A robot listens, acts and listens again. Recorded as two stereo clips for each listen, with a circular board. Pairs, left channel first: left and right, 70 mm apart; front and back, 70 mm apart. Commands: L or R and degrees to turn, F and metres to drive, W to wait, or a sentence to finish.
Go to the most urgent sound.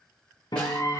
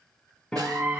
L125
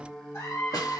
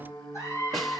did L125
L45
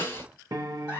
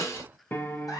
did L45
R15
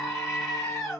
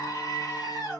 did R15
F1.0
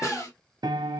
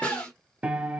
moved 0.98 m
R10
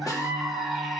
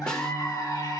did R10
F1.0
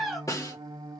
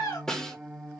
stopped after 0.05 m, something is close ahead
Arrived at the scream, straight ahead.